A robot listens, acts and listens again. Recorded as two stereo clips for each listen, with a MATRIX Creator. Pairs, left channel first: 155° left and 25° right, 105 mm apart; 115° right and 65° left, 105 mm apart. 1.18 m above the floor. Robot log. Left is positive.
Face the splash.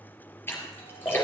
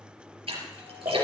note: The splash: 90° left.
cmd yaw +90
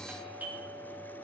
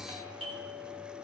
end: Facing where the splash came from. I can't hear it now.